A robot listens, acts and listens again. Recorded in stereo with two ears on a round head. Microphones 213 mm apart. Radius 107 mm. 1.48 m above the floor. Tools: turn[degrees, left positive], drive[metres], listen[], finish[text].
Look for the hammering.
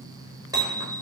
Thought: The hammering: about 15° right or 165° right.
Action: turn[-15]
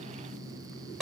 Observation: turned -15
Action: finish[Found it: hammering, straight ahead.]